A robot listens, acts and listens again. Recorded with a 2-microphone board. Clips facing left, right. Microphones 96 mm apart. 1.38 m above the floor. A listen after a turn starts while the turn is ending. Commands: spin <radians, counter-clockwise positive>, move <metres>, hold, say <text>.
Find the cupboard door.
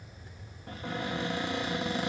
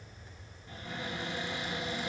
spin 1.05
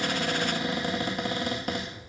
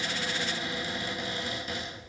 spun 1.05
spin 0.96
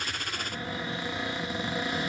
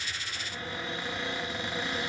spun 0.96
spin 0.17
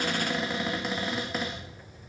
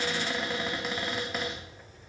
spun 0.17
say Found it: a cupboard door, straight ahead, 2 to 4 m away.